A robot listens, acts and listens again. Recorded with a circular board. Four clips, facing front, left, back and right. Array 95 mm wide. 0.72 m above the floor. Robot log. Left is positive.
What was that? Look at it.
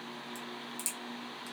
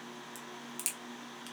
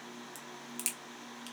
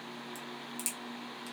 note: The crack: 155° left.
cmd yaw +155
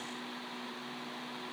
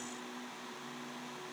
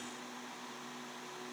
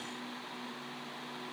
end: Facing where the crack came from. I can't hear it now.